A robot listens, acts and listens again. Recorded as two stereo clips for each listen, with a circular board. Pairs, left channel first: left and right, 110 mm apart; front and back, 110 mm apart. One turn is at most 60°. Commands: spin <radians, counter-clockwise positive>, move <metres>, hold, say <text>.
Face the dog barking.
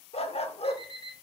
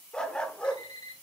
spin 1.05
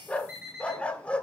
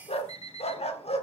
spin 0.17
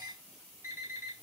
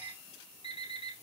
hold
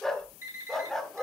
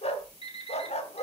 say Found it: a dog barking, straight ahead.